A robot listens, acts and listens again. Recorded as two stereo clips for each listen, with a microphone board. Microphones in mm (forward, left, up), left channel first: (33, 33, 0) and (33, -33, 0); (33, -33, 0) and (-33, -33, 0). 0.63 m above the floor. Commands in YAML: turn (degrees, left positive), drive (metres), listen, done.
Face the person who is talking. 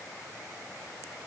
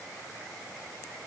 listen: true
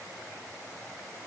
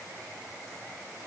listen: true
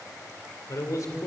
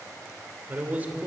turn: 115
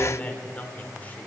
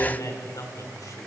turn: 25
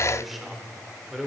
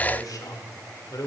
done: "Found it: a man speaking, straight ahead."